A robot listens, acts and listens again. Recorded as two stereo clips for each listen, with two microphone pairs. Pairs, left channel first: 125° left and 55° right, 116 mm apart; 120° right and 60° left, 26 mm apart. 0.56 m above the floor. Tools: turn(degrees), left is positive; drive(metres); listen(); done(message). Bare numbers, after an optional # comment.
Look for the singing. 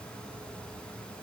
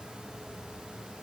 listen()
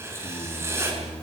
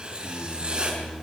# The singing: 120° left.
turn(120)
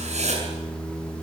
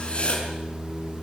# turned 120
# The singing is now 45° left.
turn(45)
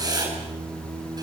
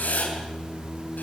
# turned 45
# The singing is now 10° left.
turn(10)
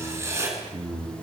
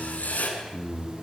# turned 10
done("Found it: singing, straight ahead.")